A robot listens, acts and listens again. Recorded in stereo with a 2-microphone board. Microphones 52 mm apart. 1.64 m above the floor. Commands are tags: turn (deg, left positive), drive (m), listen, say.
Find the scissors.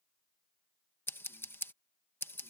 <turn deg="50"/>
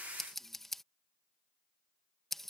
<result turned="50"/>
<say>Found it: scissors, straight ahead.</say>